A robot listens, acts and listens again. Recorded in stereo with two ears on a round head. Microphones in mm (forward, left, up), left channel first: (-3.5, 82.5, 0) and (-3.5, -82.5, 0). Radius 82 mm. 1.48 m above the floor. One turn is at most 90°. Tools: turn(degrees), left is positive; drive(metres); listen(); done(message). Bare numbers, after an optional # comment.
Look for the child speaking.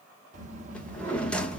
# The child speaking: about 40° right or 140° right.
turn(-40)
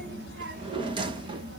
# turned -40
# So it is at 95° right.
turn(-90)
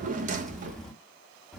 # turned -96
done("Found it: a child speaking, straight ahead, 1 to 2 m away.")